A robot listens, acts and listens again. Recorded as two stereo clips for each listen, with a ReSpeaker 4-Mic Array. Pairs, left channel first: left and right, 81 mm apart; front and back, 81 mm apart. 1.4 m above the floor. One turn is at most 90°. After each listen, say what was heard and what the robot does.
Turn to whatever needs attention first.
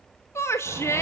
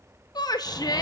The shout: 35° left. Turn 35° left.
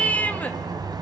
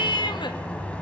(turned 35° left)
The shout is now 15° left. Turn 15° left.
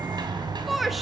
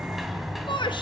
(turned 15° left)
Facing the shout, 1 to 2 m away.